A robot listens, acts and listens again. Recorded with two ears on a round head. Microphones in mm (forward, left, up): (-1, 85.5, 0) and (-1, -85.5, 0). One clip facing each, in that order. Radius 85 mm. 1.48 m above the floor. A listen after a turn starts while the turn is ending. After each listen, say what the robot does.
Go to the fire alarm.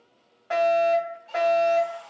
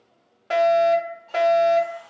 Turn 50° right.
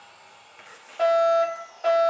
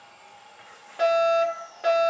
Turn 80° right.
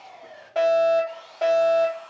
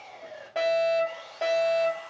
Drive 1.0 m forward.
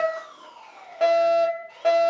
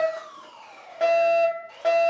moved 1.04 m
Drive 1.0 m forward.
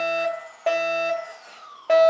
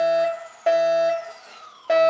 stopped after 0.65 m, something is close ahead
I am next to the fire alarm.